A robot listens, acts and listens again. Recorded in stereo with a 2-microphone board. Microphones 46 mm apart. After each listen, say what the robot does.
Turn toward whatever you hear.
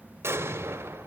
Turn 65° right.
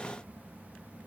Keep listening.
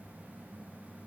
I heard an explosion, but can't make it out now. It was about straight ahead or 50° right.